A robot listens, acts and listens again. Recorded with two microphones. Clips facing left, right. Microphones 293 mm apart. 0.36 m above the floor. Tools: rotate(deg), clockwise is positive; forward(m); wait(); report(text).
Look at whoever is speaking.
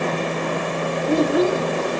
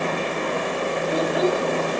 rotate(-45)
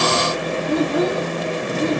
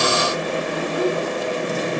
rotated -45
rotate(-85)
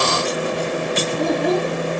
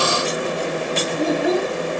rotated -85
report("Facing the child speaking.")